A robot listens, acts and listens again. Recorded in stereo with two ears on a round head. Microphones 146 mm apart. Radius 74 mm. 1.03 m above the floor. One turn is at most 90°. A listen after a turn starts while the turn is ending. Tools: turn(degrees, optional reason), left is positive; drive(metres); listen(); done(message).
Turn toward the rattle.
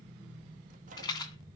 turn(degrees=25, reason="The rattle: about 25° left or 155° left.")
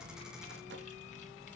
listen()
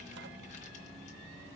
listen()
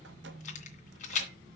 turn(degrees=90, reason="So it is at 130° left.")
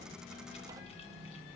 turn(degrees=40, reason="Nothing new. It was at 40° left.")
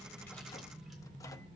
listen()
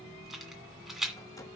done("Facing the rattle, 2 to 4 m away.")